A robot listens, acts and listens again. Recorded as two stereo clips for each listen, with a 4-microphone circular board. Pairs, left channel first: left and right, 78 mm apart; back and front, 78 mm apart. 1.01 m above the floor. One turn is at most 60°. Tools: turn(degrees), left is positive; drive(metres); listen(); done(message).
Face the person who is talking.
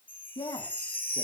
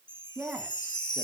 turn(degrees=60)
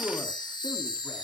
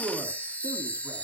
turn(degrees=25)
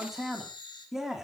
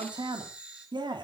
done("Facing the man speaking, 2 to 4 m away.")